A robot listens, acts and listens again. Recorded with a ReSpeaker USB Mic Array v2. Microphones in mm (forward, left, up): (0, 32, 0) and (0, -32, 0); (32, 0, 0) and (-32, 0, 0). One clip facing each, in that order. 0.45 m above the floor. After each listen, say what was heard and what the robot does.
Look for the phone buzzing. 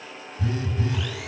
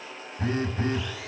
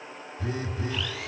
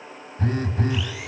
The phone buzzing: 145° right. Turn 145° right.
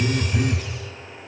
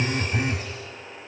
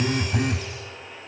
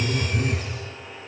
The phone buzzing is now 25° right. Turn 25° right.
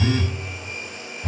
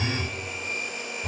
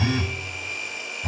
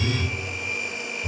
Found it: a phone buzzing, straight ahead, 1 to 2 m away.